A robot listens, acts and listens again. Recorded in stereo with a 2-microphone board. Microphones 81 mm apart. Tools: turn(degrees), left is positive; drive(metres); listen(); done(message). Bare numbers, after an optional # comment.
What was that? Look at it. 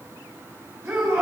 # The shout: about 35° right or 145° right.
turn(-35)
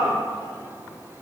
# So it is at 110° right.
turn(-110)
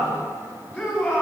# The shout is now 20° left.
turn(20)
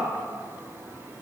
listen()
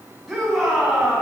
done("Facing the shout.")